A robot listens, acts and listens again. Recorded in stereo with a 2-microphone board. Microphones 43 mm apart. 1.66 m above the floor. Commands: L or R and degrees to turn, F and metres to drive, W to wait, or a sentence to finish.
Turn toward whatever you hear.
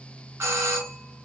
R70
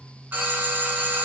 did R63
R45
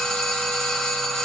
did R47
Facing the doorbell, 1 to 2 m away.